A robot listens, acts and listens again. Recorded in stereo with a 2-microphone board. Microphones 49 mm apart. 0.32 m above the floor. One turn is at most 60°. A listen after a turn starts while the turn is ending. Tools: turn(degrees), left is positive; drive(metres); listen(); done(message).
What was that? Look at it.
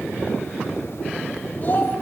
turn(degrees=40)
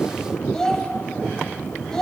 turn(degrees=15)
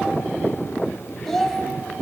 done("Facing the child speaking, under 1 m away.")